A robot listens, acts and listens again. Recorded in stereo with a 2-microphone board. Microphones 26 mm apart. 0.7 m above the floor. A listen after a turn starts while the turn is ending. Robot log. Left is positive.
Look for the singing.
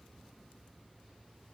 cmd idle
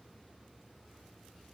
cmd idle
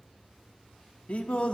note: The singing: about 55° left or 125° left.
cmd yaw +55
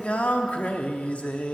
note: So it is at 65° left.
cmd yaw +65
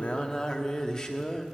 note: The singing is now 30° left.
cmd yaw +30
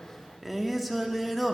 end: Facing the singing.